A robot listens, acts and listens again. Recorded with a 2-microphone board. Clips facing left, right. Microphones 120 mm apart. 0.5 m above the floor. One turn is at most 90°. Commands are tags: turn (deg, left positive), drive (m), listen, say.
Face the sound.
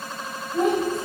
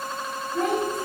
<turn deg="25"/>
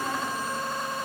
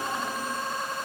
<listen/>
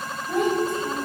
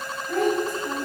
<turn deg="25"/>
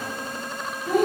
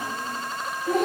<turn deg="30"/>
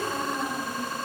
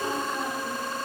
<say>Found it: a child speaking, straight ahead.</say>